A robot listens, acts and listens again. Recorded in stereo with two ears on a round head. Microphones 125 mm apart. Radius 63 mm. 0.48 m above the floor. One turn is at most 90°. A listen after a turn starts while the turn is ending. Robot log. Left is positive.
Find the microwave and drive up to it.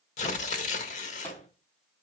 note: The microwave: about 15° left or 165° left.
cmd yaw +15
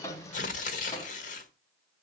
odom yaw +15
cmd idle
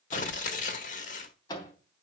note: So it is at 150° left.
cmd yaw +90
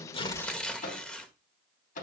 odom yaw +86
note: The microwave is now 65° left.
cmd yaw +65
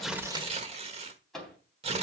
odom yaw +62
cmd fwd 1.0
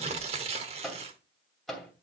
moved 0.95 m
cmd fwd 1.0
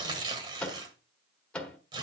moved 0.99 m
note: The microwave is now 10° left.
cmd yaw +10
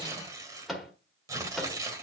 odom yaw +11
cmd fwd 1.0
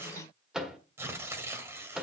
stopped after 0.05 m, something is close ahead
end: Arrived at the microwave, straight ahead.